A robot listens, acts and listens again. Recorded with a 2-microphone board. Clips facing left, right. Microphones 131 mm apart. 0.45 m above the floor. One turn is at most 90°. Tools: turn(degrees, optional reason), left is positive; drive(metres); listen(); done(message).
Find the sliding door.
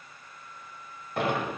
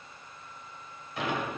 turn(degrees=55, reason="The sliding door: about 55° left or 125° left.")
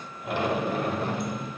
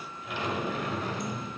turn(degrees=65, reason="So it is at 65° left.")
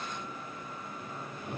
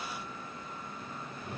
turn(degrees=25, reason="The sliding door is now 25° left.")
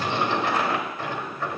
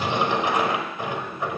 turn(degrees=-20, reason="The sliding door is now 20° right.")
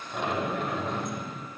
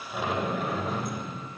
done("Found it: a sliding door, straight ahead.")